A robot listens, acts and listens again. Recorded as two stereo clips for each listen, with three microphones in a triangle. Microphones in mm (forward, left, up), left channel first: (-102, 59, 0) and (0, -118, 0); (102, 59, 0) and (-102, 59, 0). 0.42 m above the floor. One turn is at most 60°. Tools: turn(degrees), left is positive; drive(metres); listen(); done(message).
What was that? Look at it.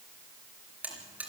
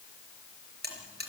turn(degrees=-60)
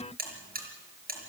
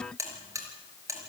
turn(degrees=-60)
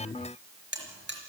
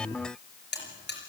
turn(degrees=-30)
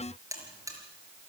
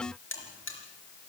turn(degrees=15)
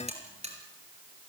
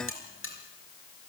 done("Found it: a buzzer, straight ahead, over 4 m away.")